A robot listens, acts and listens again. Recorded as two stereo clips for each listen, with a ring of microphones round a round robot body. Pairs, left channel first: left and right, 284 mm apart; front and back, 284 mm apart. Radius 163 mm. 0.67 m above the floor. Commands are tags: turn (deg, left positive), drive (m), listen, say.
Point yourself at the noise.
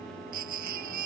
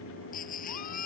<turn deg="-65"/>
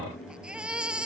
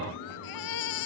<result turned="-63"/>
<say>Found it: a baby crying, straight ahead.</say>